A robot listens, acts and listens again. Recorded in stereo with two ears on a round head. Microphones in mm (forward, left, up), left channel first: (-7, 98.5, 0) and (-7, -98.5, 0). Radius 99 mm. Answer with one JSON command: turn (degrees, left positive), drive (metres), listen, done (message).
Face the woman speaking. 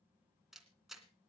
{"listen": true}
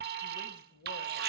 {"turn": 55}
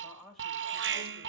{"done": "Found it: a woman speaking, straight ahead."}